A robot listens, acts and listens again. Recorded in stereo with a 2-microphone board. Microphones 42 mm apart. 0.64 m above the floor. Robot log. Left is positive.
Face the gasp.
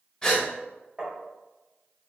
note: The gasp: about 15° left or 165° left.
cmd yaw +15
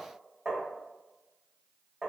cmd idle
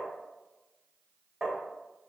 end: I heard a gasp, but can't make it out now. It was about straight ahead or 150° left.